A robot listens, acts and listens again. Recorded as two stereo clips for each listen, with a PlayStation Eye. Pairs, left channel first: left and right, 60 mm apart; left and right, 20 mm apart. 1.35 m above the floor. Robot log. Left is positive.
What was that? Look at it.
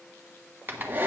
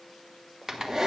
note: The hair dryer: about 30° right or 150° right.
cmd yaw -30
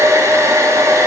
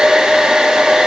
note: So it is at 115° right.
cmd yaw -115
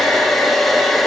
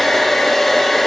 end: Found it: a hair dryer, straight ahead.